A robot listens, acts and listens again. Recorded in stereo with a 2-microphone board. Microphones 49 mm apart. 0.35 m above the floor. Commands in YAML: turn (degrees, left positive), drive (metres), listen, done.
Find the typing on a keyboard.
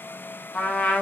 listen: true
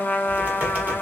turn: -35
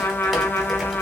done: "Facing the typing on a keyboard."